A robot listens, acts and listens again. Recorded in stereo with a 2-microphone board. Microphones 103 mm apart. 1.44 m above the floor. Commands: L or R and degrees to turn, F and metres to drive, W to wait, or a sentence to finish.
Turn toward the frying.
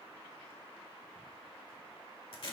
W
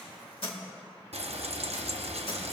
R90
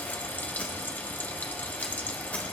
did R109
L20
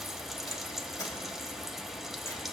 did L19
Found it: frying, straight ahead, under 1 m away.